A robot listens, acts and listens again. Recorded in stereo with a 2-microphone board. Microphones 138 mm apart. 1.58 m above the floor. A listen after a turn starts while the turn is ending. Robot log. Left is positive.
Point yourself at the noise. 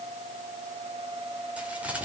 cmd yaw -30
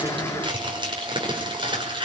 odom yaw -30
note: So it is at 145° right.
cmd yaw -145
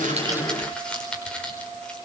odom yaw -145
end: Found it: crumpling, straight ahead, over 4 m away.